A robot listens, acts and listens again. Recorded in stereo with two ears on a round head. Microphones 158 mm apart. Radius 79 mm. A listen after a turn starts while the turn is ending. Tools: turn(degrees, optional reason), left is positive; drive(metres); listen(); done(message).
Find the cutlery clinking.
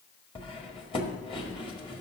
turn(degrees=30, reason="The cutlery clinking: about 30° left or 150° left.")
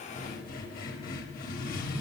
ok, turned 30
turn(degrees=120, reason="So it is at 120° left.")
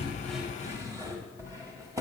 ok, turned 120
turn(degrees=-20, reason="The cutlery clinking is now 20° right.")
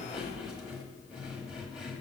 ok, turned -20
done("Facing the cutlery clinking.")